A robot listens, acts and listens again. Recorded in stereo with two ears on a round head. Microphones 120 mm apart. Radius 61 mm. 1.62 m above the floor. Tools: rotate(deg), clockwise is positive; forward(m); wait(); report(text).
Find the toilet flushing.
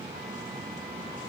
wait()
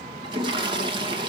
rotate(35)
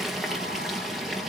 report("Facing the toilet flushing.")